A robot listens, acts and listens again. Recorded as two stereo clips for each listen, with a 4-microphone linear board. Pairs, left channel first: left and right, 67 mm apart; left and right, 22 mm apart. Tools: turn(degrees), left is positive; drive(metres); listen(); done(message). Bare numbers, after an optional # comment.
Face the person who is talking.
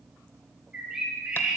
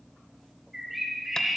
listen()
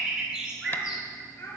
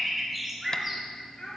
# The child speaking: about 40° left or 140° left.
turn(40)
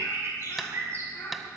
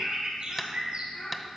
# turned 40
# So it is at 120° left.
turn(120)
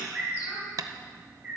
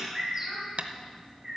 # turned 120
listen()
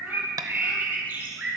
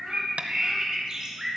listen()
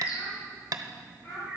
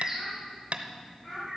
# The child speaking is now 35° left.
turn(35)
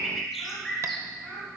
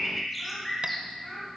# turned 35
done("Facing the child speaking.")